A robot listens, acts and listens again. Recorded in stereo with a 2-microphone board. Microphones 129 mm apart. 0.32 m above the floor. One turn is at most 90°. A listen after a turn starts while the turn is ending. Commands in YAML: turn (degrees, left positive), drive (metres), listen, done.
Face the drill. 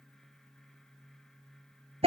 listen: true
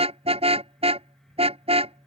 listen: true
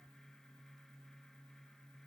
done: "I can't make out a drill, only a car horn."